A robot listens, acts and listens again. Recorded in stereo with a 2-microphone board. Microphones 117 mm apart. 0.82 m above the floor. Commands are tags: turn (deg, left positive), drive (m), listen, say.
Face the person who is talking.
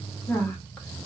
<turn deg="30"/>
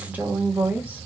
<turn deg="-15"/>
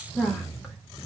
<say>Found it: a woman speaking, straight ahead.</say>